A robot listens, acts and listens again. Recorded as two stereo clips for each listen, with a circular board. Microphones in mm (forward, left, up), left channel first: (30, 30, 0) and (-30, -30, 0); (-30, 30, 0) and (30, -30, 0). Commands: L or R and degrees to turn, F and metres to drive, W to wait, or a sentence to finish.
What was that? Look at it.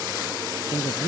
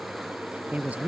L30
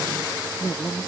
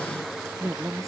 Facing the woman speaking.